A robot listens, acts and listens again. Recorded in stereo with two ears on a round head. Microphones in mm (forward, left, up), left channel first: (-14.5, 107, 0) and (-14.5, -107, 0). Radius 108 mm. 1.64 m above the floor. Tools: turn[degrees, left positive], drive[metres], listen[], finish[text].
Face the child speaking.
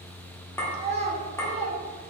Thought: The child speaking: about 30° right or 150° right.
Action: turn[-30]
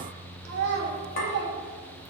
Thought: So it is at 115° right.
Action: turn[-115]
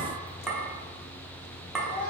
Thought: The child speaking is now 20° left.
Action: turn[20]
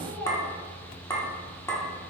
Action: finish[Facing the child speaking.]